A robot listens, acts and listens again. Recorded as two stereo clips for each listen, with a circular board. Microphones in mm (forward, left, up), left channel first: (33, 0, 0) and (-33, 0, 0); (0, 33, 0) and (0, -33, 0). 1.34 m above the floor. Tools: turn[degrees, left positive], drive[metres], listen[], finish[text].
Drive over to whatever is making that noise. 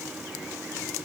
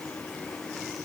Action: listen[]
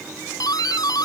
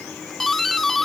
Action: drive[1.0]
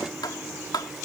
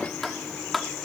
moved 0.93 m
Action: drive[1.0]
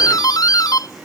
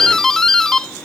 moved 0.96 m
Thought: The doorbell is now 10° left.
Action: turn[10]
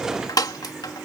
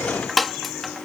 Action: drive[1.0]
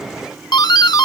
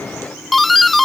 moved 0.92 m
Action: drive[1.0]
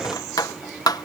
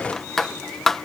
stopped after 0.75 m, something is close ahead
Action: finish[Arrived at the doorbell, straight ahead.]